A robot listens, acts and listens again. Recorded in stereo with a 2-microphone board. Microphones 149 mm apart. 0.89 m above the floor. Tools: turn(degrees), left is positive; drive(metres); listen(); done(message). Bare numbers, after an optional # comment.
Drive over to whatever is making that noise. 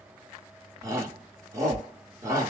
# The shout: about 20° right or 160° right.
turn(-20)
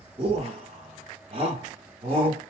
# So it is at 140° right.
turn(-140)
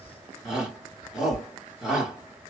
drive(1.0)
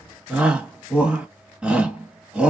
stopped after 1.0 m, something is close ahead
done("I am next to the shout.")